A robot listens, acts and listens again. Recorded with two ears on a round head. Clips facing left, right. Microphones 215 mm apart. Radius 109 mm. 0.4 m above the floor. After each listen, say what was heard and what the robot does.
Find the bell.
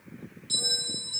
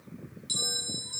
The bell: about 30° right or 150° right. Turn 30° right.
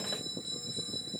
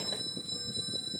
Facing the bell.